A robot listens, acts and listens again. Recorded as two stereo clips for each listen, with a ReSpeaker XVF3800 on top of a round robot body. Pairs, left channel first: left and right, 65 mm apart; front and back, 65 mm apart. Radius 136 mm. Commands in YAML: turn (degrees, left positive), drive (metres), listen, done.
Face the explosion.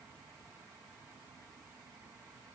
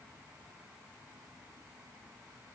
listen: true
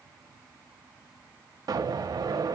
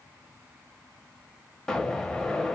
turn: -80
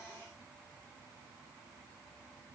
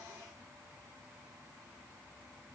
done: "Facing where the explosion came from. I can't hear it now."